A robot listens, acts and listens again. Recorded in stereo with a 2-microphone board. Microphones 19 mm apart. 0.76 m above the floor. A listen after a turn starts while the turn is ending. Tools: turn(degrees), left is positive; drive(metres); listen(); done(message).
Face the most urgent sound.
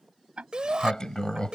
turn(degrees=-45)
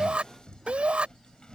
turn(degrees=-90)
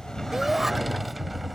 listen()
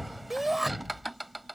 turn(degrees=-15)
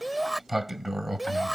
done("Facing the shout.")